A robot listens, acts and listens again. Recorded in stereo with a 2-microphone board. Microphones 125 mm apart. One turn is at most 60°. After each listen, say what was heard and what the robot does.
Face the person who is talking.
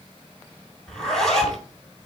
Keep listening.
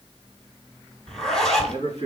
The man speaking: about 70° left or 110° left. Turn 60° left.
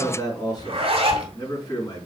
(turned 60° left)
So it is at 40° left. Turn 40° left.
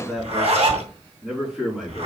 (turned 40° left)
Found it: a man speaking, straight ahead, over 4 m away.